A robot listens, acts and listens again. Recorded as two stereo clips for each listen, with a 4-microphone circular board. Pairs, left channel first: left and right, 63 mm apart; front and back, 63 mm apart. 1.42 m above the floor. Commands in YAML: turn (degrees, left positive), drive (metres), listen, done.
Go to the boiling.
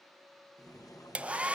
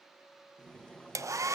turn: 75
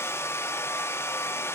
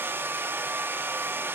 listen: true
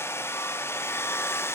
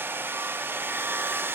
listen: true
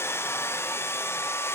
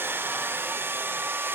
done: "I heard boiling from this way, but can't make it out now. I did not reach it."